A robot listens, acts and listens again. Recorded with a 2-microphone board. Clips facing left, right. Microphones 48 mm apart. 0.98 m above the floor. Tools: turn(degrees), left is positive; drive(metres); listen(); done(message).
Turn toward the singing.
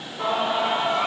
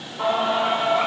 turn(degrees=-30)
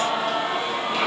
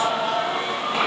turn(degrees=-155)
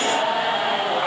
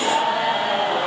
turn(degrees=-15)
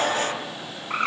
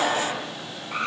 turn(degrees=-15)
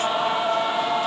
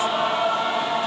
turn(degrees=-30)
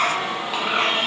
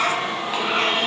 done("Facing the singing, 1 to 2 m away.")